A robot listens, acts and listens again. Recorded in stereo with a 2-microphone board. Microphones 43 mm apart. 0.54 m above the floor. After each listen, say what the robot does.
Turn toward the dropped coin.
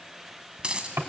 Turn 20° right.
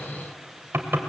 Keep listening.
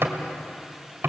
I heard a dropped coin, but can't make it out now. It was about straight ahead or 140° right.